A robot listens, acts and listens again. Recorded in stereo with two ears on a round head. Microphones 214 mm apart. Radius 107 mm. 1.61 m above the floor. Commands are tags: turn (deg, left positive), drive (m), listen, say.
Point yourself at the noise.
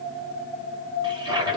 <turn deg="-20"/>
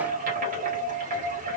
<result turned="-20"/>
<turn deg="-140"/>
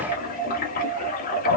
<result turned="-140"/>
<turn deg="45"/>
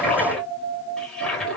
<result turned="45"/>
<say>Facing the toilet flushing.</say>